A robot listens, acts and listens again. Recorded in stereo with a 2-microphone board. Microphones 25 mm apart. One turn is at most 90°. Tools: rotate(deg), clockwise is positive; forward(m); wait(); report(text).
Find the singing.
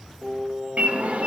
rotate(60)
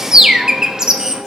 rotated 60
wait()
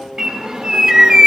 rotate(25)
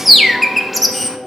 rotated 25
rotate(-40)
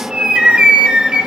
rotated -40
wait()
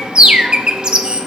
wait()
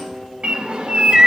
rotate(-10)
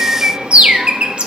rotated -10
wait()
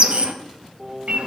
report("Found it: singing, straight ahead.")